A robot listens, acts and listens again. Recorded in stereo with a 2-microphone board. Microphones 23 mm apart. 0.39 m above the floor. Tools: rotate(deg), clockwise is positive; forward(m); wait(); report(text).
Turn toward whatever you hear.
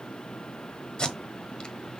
rotate(-40)
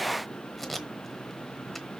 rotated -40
report("Facing the tape being pulled, 1 to 2 m away.")